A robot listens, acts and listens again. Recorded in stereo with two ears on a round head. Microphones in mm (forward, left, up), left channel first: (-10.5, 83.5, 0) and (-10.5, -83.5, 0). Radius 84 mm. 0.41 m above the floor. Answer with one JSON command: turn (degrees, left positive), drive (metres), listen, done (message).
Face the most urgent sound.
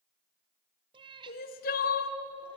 {"turn": 50}
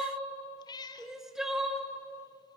{"done": "Facing the crying."}